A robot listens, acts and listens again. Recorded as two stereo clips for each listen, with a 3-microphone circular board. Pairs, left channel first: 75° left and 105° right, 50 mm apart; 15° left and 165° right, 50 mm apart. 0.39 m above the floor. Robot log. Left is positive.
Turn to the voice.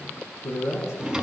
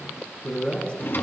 note: The man speaking: 75° left.
cmd yaw +75
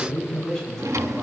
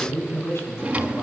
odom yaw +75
end: Found it: a man speaking, straight ahead, over 4 m away.